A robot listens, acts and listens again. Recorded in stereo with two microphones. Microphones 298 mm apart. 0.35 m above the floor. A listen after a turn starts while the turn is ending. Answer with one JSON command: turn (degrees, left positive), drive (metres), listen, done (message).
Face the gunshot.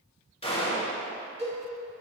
{"turn": 20}
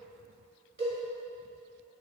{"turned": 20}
{"listen": true}
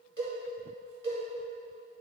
{"done": "I heard a gunshot, but can't make it out now. It was about straight ahead or 140° left."}